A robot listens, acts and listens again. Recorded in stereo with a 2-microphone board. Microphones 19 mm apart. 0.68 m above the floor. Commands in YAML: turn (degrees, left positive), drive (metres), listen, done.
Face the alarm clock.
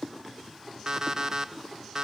turn: -30
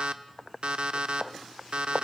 turn: -120
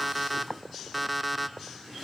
done: "Facing the alarm clock, under 1 m away."